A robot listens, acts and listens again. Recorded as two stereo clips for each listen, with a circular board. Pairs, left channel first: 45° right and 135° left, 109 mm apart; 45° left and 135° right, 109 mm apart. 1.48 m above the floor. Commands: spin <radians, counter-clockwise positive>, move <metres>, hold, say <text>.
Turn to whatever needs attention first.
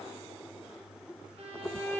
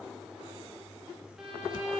hold
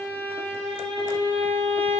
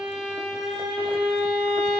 hold
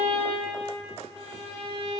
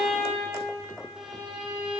say I can't make out anything urgent to turn to.